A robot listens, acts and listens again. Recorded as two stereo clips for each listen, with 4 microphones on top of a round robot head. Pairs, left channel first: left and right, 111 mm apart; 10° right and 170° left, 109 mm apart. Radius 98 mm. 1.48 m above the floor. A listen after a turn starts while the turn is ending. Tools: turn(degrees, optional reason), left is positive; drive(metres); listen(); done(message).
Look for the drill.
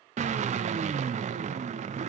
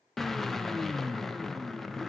turn(degrees=-95, reason="The drill: 95° right.")
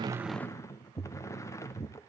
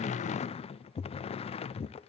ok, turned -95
turn(degrees=25, reason="The drill is now 25° left.")
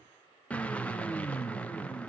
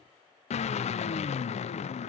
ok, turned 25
turn(degrees=10, reason="The drill is now 10° left.")
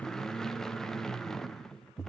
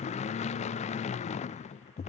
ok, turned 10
done("Facing the drill, under 1 m away.")